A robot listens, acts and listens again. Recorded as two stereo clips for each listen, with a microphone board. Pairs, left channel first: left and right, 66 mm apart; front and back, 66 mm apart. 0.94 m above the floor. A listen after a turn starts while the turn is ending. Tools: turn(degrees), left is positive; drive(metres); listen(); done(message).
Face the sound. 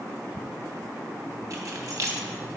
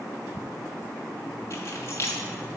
turn(degrees=-50)
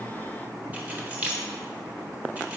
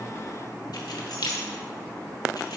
turn(degrees=-20)
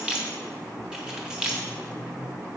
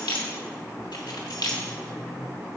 turn(degrees=-10)
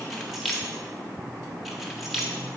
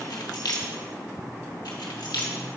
done("Facing the keys jangling.")